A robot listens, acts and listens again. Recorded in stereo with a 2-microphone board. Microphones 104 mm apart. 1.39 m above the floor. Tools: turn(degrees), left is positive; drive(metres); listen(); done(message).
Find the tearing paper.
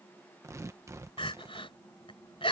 turn(degrees=-25)
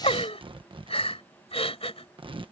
turn(degrees=-130)
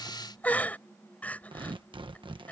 turn(degrees=-50)
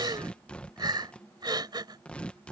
turn(degrees=10)
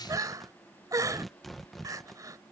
done("Facing the tearing paper.")